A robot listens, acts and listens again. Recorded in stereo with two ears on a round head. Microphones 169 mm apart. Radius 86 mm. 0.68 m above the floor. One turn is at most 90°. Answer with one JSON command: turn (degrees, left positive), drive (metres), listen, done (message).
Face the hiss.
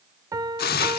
{"turn": 55}
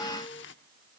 {"listen": true}
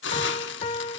{"turn": 65}
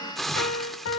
{"done": "Found it: a hiss, straight ahead."}